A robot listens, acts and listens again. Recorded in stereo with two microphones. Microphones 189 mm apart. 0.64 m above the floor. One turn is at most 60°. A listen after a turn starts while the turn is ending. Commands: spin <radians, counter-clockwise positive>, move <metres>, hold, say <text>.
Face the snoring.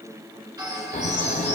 spin 0.70
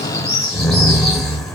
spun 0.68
say Found it: snoring, straight ahead, under 1 m away.